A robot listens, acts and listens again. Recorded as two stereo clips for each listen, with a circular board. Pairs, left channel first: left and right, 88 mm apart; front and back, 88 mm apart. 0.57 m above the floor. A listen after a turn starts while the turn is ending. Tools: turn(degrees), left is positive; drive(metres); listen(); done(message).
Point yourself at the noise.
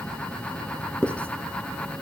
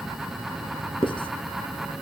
turn(degrees=15)
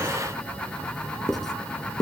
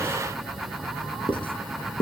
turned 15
done("Facing the writing.")